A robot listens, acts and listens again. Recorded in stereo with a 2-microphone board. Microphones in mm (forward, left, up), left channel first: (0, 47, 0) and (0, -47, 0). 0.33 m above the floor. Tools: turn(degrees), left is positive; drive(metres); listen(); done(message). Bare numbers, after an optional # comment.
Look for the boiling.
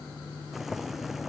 turn(30)
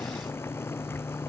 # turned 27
# So it is at 155° left.
turn(155)
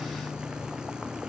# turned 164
# The boiling is now 10° right.
turn(-10)
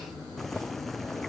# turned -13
done("Found it: boiling, straight ahead.")